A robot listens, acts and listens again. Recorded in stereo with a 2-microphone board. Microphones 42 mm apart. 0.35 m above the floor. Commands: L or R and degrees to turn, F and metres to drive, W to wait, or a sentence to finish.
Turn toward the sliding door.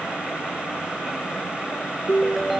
W
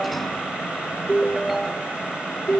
W
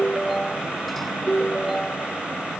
I can't make out a sliding door to turn to.